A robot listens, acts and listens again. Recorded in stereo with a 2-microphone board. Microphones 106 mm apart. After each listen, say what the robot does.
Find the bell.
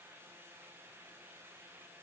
Keep listening.
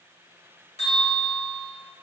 Turn 90° left.
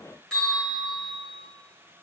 Found it: a bell, straight ahead.